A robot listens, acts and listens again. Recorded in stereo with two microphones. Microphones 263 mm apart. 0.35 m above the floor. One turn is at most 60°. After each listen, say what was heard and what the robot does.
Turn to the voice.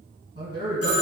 The man speaking: about 25° right or 155° right. Turn 25° right.
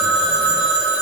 Keep listening.
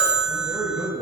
Found it: a man speaking, straight ahead, 1 to 2 m away.